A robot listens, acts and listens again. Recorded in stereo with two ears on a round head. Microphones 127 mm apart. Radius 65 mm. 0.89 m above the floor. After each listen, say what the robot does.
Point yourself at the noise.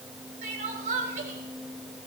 Turn 60° right.
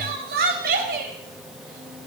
Turn 65° right.
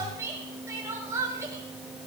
Turn 20° right.
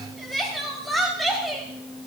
Found it: crying, straight ahead, 2 to 4 m away.